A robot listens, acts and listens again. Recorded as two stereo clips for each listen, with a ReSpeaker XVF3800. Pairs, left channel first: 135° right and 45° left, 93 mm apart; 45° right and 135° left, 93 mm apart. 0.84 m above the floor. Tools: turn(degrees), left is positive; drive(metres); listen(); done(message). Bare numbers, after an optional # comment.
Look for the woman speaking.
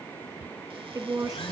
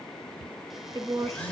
# The woman speaking: 90° left.
turn(90)
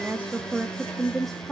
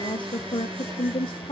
# The woman speaking is now 50° right.
turn(-50)
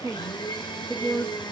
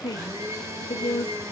# The woman speaking is now 35° right.
turn(-35)
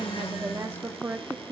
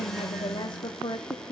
# The woman speaking is now 10° right.
turn(-10)
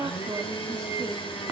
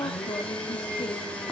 done("Facing the woman speaking, 1 to 2 m away.")